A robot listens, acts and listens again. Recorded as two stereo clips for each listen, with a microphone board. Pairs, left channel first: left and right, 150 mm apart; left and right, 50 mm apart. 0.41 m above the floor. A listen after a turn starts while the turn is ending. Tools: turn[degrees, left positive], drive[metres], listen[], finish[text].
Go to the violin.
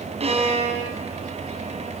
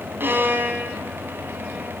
Thought: The violin: about 45° right or 135° right.
Action: turn[-45]
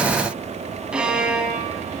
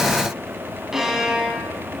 Action: drive[1.0]
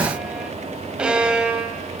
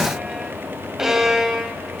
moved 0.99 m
Thought: The violin is now 10° right.
Action: turn[-10]
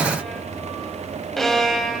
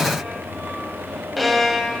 Action: drive[1.0]
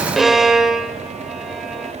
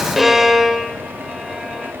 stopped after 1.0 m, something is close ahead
Action: finish[I am next to the violin.]